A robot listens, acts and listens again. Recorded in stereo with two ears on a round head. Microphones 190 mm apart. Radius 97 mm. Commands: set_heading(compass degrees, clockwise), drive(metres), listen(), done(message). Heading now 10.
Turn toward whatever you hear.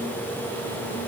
listen()
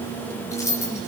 set_heading(340)
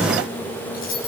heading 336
set_heading(201)
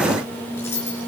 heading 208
set_heading(198)
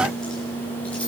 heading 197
listen()
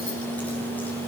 listen()
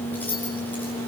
set_heading(187)
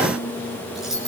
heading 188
done("Facing the keys jangling, over 4 m away.")